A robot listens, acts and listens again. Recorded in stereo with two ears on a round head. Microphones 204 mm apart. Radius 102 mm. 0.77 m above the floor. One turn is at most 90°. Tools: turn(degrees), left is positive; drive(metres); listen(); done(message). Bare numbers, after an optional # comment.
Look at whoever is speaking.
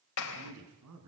turn(-90)
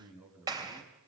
done("Found it: a man speaking, straight ahead, over 4 m away.")